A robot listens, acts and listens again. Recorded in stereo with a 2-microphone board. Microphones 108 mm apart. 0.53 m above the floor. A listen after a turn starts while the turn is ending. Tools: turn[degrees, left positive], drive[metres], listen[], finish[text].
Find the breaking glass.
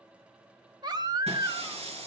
Action: turn[-90]
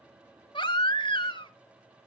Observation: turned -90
Action: finish[I heard breaking glass from this way, but can't make it out now.]